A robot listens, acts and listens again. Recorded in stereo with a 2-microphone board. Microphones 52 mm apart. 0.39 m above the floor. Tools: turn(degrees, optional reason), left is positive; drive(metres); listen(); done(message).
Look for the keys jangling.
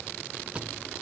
turn(degrees=-25, reason="The keys jangling: about 25° right or 155° right.")
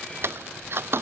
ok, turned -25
turn(degrees=-125, reason="So it is at 125° right.")
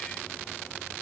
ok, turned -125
listen()
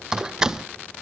turn(degrees=-10, reason="The keys jangling is now 10° right.")
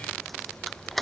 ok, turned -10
done("Found it: keys jangling, straight ahead.")